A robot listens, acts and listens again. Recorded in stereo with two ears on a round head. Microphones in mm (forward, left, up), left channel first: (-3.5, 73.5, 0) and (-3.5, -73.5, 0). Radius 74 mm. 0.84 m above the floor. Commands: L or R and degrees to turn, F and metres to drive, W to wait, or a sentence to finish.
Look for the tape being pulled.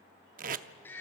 R55
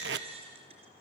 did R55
R75
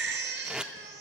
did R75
Facing the tape being pulled.